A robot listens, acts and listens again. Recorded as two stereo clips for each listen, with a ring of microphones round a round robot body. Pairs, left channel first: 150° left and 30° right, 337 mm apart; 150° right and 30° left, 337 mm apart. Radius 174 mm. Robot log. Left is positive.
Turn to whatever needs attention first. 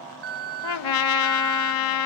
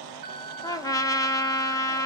end: Found it: an alarm, straight ahead, 2 to 4 m away.